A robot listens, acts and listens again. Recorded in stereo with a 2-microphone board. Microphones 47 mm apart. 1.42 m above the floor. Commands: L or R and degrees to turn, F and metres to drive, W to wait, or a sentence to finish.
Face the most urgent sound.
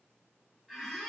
W
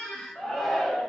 L30
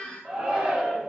R25
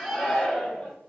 L15
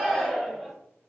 Facing the shout, 1 to 2 m away.